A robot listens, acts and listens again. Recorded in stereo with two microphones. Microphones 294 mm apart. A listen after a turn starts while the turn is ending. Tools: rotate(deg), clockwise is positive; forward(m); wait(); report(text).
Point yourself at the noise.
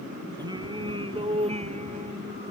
rotate(20)
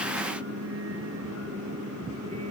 rotate(130)
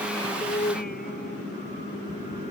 rotate(-30)
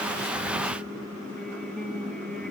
report("Facing the singing.")